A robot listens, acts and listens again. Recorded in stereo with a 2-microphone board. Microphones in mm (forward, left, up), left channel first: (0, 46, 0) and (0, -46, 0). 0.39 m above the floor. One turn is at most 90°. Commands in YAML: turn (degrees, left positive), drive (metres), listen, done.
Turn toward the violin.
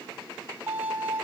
turn: -15
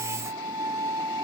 turn: -90
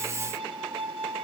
turn: -80
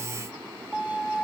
turn: -15
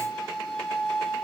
done: "Found it: a violin, straight ahead, 2 to 4 m away."